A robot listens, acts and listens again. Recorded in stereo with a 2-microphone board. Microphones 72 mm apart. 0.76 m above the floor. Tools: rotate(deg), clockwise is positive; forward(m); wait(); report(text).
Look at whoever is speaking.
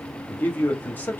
rotate(-25)
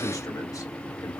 rotate(-125)
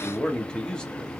rotate(-10)
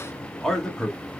report("Facing the man speaking, 1 to 2 m away.")